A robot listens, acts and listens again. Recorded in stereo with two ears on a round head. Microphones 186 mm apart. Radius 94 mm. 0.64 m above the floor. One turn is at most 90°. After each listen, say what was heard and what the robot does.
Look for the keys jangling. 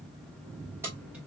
Turn 30° right.
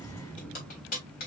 So it is at 45° left. Turn 45° left.
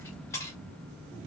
The keys jangling is now 15° left. Turn 15° left.
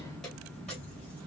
Keep listening.
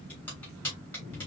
The keys jangling is now 10° left. Turn 10° left.
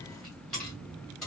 Found it: keys jangling, straight ahead, 2 to 4 m away.